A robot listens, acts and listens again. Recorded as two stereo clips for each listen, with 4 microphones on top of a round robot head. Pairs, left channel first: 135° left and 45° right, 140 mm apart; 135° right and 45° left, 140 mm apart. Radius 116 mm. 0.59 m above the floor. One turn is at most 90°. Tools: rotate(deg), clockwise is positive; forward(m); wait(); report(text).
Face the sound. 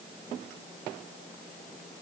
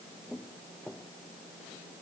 wait()
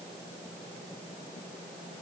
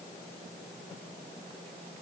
wait()
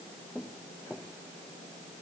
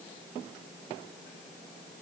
report("I can't make out anything to turn to.")